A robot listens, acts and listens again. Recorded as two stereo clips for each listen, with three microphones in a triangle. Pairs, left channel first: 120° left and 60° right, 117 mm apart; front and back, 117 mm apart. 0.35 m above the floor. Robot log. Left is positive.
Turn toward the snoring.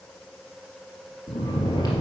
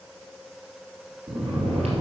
note: The snoring: 175° left.
cmd yaw +175
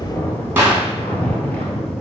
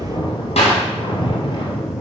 note: The snoring is now 45° left.
cmd yaw +45
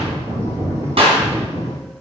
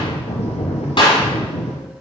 end: Found it: snoring, straight ahead, 1 to 2 m away.